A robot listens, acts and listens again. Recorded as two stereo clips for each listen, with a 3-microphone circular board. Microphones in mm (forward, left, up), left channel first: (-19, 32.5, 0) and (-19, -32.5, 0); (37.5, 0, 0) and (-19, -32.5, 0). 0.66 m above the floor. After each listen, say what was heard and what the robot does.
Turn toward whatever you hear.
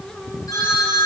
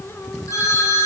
The phone ringing: 65° left. Turn 65° left.
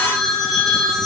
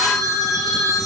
Found it: a phone ringing, straight ahead.